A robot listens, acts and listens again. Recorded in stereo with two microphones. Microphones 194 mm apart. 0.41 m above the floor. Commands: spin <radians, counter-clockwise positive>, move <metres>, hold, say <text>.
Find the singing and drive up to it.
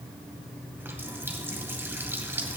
hold
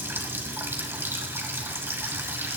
hold
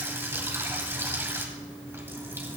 say I can't make out singing to turn to.